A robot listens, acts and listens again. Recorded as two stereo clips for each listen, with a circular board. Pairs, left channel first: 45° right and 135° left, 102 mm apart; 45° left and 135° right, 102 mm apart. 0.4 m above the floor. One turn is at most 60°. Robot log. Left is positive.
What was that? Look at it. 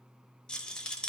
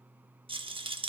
note: The rattle: 125° right.
cmd yaw -60
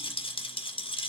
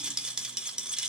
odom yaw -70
note: The rattle is now 55° right.
cmd yaw -55
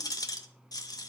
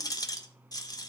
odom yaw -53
end: Found it: a rattle, straight ahead.